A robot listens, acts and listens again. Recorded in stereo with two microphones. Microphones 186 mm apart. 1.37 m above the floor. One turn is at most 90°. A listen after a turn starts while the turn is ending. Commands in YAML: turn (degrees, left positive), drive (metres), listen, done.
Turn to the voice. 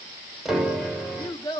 turn: 20
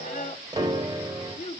turn: 90
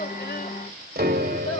turn: 45
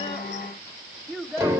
done: "Found it: a child speaking, straight ahead, 2 to 4 m away."